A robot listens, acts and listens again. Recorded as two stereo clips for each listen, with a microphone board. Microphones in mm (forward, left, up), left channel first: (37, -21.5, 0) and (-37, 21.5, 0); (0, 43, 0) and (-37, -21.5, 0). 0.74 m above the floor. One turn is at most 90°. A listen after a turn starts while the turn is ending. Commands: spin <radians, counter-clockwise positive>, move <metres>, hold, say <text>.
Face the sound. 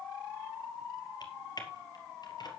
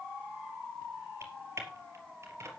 spin -1.22
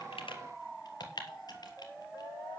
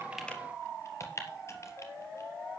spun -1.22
spin 0.17
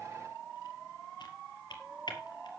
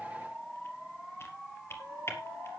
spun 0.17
say Found it: typing on a keyboard, straight ahead, 2 to 4 m away.